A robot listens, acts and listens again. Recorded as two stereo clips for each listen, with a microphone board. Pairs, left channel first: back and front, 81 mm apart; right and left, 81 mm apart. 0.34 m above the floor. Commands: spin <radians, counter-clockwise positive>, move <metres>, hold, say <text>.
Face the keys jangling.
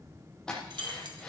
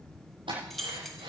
say Found it: keys jangling, straight ahead.